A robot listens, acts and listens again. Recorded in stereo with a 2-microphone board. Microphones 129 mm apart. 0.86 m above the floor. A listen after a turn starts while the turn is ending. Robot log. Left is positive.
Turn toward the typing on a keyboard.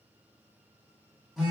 cmd idle
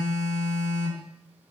cmd idle
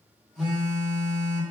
end: I can't make out typing on a keyboard to turn to.